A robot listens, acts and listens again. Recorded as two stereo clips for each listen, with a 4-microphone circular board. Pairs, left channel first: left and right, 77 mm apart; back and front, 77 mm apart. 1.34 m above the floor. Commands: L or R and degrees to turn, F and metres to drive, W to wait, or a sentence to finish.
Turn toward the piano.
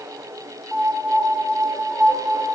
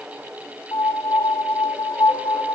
R165
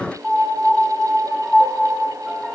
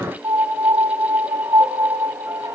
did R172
Facing the piano.